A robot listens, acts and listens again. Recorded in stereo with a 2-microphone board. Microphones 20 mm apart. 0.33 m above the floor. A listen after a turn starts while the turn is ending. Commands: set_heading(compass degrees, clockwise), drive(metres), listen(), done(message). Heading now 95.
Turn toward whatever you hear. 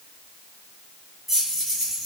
set_heading(65)
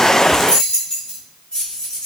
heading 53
set_heading(283)
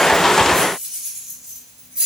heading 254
set_heading(299)
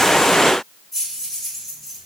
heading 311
set_heading(301)
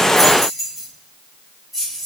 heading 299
done("Found it: keys jangling, straight ahead, 2 to 4 m away.")